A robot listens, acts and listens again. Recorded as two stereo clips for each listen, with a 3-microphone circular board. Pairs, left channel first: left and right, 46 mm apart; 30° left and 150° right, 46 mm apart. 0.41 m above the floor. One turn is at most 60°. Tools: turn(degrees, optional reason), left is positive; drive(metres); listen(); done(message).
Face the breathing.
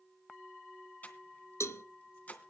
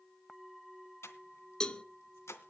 turn(degrees=35, reason="The breathing: 35° left.")
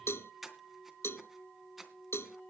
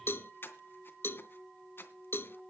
done("Facing the breathing.")